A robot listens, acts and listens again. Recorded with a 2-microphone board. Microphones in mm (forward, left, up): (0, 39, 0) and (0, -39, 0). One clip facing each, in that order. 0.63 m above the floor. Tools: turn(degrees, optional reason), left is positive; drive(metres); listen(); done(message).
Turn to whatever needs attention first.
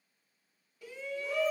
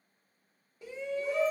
turn(degrees=-25, reason="The shout: about 25° right or 155° right.")
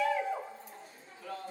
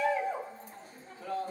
turn(degrees=-120, reason="So it is at 120° right.")
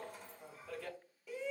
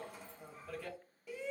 done("Found it: a shout, straight ahead, 1 to 2 m away.")